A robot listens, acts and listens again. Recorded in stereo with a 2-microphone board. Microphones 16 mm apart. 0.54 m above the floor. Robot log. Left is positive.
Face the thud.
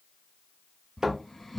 note: The thud: about 65° right or 115° right.
cmd yaw -65
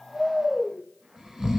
cmd idle
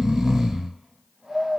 end: I heard a thud, but can't make it out now. It was about straight ahead or 50° right.